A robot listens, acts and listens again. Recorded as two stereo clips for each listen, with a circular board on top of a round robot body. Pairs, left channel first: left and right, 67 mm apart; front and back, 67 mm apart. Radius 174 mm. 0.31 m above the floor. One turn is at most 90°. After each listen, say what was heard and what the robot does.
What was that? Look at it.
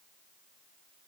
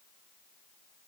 Keep listening.
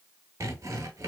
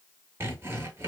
The sawing: 130° right. Turn 90° right.
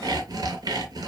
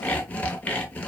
The sawing is now 70° right. Turn 70° right.
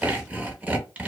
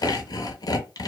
The sawing is now 20° right. Turn 20° right.
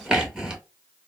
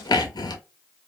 The sawing is now 10° right. Turn 10° right.
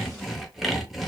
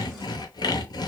Facing the sawing, under 1 m away.